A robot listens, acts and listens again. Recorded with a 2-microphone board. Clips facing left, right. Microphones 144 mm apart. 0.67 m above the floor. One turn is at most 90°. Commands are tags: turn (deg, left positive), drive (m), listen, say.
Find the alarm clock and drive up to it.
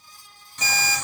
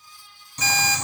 <turn deg="30"/>
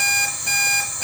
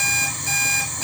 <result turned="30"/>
<turn deg="90"/>
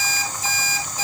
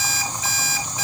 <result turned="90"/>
<turn deg="35"/>
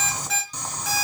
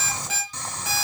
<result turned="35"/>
<drive m="1.0"/>
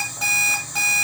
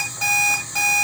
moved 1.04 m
<drive m="1.0"/>
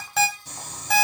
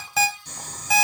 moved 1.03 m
<drive m="1.0"/>
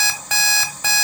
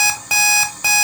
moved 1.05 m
<turn deg="-10"/>
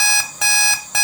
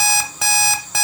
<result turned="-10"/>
<drive m="1.0"/>
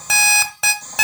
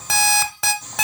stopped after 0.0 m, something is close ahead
<say>Arrived at the alarm clock, straight ahead.</say>